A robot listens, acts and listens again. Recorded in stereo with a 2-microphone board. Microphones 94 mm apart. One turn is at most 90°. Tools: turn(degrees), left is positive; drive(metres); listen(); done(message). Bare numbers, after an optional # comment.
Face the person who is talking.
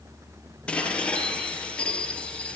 listen()
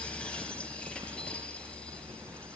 listen()
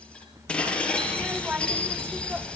turn(-30)
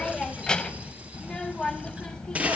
# So it is at 10° left.
turn(10)
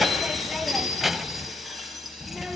done("Found it: a child speaking, straight ahead, 1 to 2 m away.")